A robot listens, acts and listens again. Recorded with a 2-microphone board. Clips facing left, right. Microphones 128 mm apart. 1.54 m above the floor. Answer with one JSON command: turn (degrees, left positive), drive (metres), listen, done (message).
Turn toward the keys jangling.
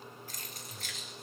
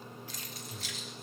{"turn": 50}
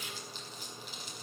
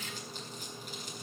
{"turn": 15}
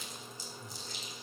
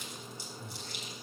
{"listen": true}
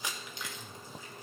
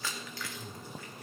{"turn": 20}
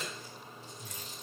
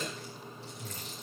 {"turn": 10}
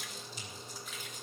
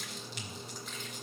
{"listen": true}
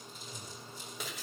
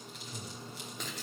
{"done": "Found it: keys jangling, straight ahead, 2 to 4 m away."}